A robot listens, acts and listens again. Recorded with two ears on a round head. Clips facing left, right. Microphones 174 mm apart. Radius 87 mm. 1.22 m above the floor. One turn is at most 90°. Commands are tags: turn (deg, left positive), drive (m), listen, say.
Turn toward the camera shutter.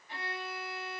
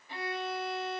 <listen/>
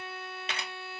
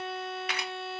<turn deg="25"/>
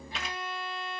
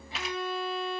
<say>Facing the camera shutter, 1 to 2 m away.</say>